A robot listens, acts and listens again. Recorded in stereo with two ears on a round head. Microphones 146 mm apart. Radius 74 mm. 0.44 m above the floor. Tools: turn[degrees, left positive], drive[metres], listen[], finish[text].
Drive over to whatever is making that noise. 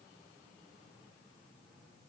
Action: listen[]
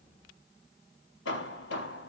Action: turn[90]
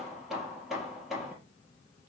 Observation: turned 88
Action: drive[1.0]
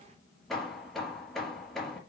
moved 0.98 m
Action: drive[1.0]
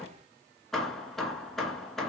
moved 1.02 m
Action: drive[1.0]
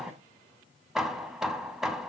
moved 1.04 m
Action: drive[1.0]
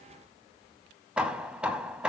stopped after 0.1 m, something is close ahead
Action: finish[I am next to the hammering.]